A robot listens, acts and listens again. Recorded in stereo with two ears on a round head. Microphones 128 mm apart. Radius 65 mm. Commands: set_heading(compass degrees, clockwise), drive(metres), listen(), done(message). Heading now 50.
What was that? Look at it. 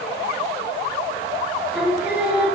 set_heading(80)
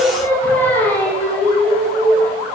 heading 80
set_heading(50)
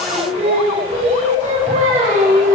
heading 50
set_heading(105)
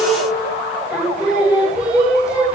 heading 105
done("Facing the singing, 2 to 4 m away.")